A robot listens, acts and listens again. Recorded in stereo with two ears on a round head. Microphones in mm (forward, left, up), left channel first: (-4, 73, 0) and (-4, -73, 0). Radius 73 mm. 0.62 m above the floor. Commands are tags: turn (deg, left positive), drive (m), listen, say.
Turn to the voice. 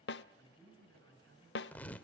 <turn deg="-70"/>
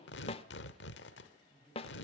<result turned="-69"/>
<say>Facing the man speaking, over 4 m away.</say>